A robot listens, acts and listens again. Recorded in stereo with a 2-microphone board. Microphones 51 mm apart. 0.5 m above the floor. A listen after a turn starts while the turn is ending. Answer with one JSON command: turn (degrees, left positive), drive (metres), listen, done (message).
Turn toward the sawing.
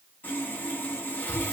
{"turn": 35}
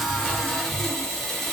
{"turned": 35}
{"done": "Facing the sawing, under 1 m away."}